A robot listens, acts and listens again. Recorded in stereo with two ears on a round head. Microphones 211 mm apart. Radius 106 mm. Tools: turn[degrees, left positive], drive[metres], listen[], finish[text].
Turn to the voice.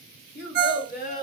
Thought: The child speaking: about 45° left or 135° left.
Action: turn[45]
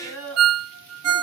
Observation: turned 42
Thought: So it is at 105° left.
Action: turn[105]
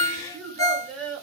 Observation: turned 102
Action: finish[Facing the child speaking.]